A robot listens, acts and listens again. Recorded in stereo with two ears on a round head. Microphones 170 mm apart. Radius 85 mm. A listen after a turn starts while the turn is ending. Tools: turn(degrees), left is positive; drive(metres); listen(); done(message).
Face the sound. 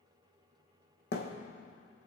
turn(degrees=55)
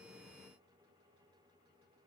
listen()
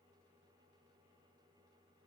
done("I heard a thud, but can't make it out now. It was about straight ahead or 70° left.")